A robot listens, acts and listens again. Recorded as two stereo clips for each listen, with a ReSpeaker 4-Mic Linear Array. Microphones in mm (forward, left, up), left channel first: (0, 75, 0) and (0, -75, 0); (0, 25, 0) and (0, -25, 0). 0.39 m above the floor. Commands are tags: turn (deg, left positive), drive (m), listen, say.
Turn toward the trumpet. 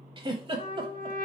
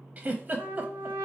<turn deg="-60"/>
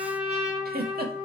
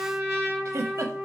<turn deg="-10"/>
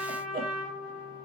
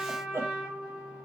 <say>Found it: a trumpet, straight ahead, 2 to 4 m away.</say>